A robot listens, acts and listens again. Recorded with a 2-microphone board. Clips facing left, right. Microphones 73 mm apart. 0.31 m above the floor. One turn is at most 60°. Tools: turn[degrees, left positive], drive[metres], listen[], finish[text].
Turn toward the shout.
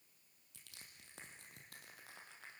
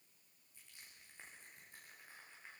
Action: listen[]
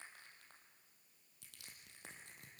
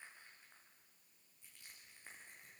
Action: listen[]
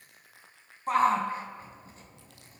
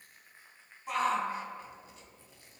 Thought: The shout: about 40° left or 140° left.
Action: turn[40]
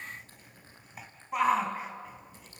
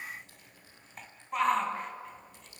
Action: finish[Found it: a shout, straight ahead.]